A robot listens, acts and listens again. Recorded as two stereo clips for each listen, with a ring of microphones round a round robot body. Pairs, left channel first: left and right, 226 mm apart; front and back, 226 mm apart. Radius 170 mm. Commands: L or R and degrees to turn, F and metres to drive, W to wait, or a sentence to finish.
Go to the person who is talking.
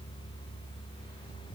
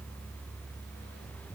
W
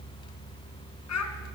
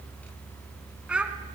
L95
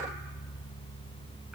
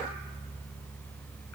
W
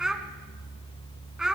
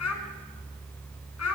F1.0
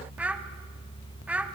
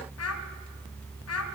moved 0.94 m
F1.0
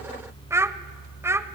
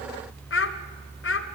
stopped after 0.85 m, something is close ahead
R10
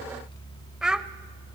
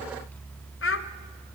I am next to the child speaking.